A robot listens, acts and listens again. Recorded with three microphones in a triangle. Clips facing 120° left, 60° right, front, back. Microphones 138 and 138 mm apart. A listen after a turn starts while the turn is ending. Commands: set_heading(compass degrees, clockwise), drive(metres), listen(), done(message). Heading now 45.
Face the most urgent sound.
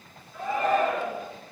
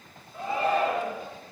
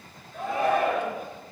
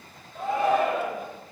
done("Facing the shout.")